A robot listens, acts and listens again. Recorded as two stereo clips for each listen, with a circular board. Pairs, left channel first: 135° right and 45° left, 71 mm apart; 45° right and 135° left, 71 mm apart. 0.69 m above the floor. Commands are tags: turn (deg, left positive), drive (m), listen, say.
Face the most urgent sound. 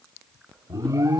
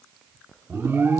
<turn deg="80"/>
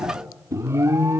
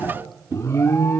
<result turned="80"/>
<say>Found it: an alarm, straight ahead, 1 to 2 m away.</say>